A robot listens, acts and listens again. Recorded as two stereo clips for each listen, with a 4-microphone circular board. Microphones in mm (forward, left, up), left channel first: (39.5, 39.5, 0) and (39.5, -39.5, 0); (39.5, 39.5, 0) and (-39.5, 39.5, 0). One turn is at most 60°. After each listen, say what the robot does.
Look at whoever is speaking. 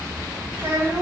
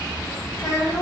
Turn 35° right.
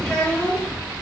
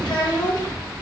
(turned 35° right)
Turn 10° left.
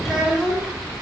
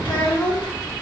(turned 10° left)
Facing the child speaking, 1 to 2 m away.